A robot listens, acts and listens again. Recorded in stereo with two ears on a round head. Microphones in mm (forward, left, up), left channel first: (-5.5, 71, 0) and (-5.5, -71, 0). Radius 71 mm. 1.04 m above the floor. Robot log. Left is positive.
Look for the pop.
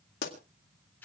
note: The pop: about 65° left or 115° left.
cmd yaw +65
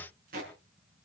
cmd idle
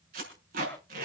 end: I heard a pop, but can't make it out now. It was about straight ahead or 50° left.